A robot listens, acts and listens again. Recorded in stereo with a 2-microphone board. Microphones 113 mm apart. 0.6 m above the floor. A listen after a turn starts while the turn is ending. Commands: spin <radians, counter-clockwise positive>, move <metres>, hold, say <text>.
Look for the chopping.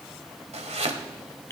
spin -1.57
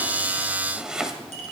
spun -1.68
say Found it: chopping, straight ahead, 1 to 2 m away.